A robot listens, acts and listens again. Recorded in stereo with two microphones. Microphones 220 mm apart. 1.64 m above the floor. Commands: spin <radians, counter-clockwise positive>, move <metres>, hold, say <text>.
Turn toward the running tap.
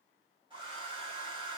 hold
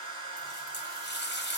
spin 0.87
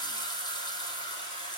spin 0.35
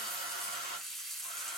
say Found it: a running tap, straight ahead.